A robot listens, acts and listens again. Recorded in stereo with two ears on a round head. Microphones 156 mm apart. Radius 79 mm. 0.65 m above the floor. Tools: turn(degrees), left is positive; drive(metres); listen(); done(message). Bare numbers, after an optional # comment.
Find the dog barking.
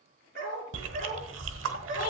# The dog barking: about 55° right or 125° right.
turn(-55)
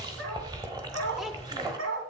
# So it is at 85° right.
turn(-85)
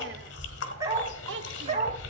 # The dog barking is now 40° right.
turn(-40)
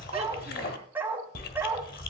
# The dog barking is now 10° right.
turn(-10)
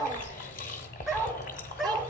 done("Facing the dog barking.")